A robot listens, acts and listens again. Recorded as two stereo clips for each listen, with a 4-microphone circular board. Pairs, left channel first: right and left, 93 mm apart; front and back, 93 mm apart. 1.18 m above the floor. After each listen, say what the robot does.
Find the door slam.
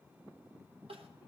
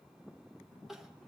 Keep listening.
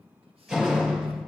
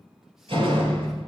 Turn 170° left.
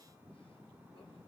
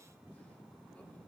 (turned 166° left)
I heard a door slam from this way, but can't make it out now.